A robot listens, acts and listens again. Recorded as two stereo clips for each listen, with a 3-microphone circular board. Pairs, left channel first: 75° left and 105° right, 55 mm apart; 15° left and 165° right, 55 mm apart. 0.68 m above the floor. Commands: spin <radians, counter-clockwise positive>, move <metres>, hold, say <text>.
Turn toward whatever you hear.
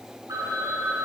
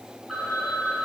spin -1.40
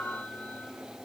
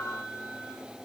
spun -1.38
say Found it: a phone ringing, straight ahead, over 4 m away.